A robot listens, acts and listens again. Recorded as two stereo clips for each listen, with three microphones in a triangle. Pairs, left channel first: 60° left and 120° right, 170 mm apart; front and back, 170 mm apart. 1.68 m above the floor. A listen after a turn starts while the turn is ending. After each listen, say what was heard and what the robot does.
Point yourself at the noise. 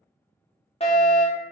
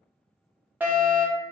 The fire alarm: 100° left. Turn 100° left.
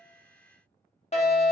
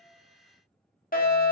The fire alarm is now 15° left. Turn 15° left.
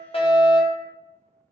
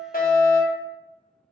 Facing the fire alarm, under 1 m away.